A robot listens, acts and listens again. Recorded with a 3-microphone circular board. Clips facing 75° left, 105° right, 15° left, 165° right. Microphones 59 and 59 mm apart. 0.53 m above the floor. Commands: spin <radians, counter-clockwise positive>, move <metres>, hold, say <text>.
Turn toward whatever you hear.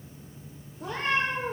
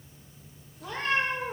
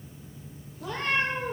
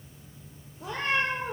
spin 2.27
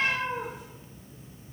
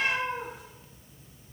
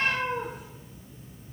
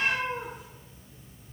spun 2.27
spin -0.17
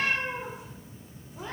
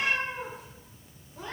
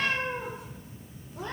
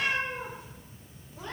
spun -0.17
say Facing the cat meowing, 2 to 4 m away.